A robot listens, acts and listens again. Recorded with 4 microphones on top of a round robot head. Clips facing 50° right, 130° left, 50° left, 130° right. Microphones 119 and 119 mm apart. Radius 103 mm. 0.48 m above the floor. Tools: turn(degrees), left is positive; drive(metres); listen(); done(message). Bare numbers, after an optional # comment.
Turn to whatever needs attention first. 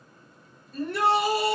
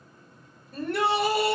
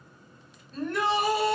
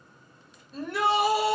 # The shout: 145° left.
turn(145)
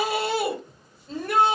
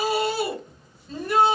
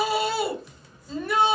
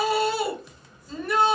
# The shout is now 40° right.
turn(-40)
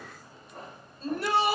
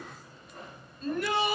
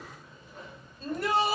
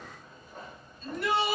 done("Found it: a shout, straight ahead.")